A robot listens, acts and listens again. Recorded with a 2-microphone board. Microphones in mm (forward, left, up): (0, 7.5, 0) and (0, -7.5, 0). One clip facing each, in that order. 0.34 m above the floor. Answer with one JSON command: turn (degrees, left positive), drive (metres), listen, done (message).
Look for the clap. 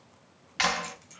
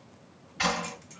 {"turn": 55}
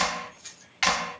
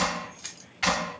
{"turn": 45}
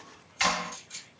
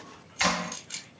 {"turn": -10}
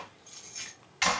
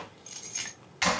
{"done": "Facing the clap."}